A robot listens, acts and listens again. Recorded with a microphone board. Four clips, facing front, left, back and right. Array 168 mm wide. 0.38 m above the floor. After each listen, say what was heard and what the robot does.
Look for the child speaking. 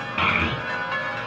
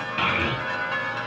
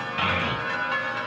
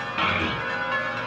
Found it: a child speaking, straight ahead, 2 to 4 m away.